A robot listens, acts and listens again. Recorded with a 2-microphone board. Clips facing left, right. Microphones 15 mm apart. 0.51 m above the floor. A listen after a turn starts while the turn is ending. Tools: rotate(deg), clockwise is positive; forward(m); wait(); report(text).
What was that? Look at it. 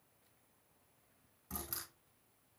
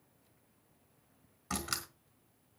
rotate(70)
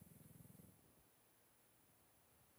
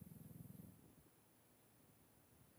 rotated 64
wait()
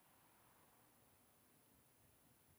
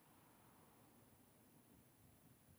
report("I heard a door slam, but can't make it out now. It was about 5° right or 45° right.")